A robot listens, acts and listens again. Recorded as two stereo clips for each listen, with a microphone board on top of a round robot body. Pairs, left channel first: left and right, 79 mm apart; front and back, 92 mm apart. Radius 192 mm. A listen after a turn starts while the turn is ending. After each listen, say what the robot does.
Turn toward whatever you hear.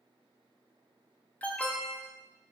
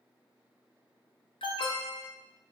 Turn 15° left.
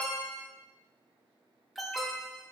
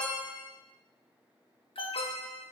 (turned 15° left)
Found it: an alarm, straight ahead.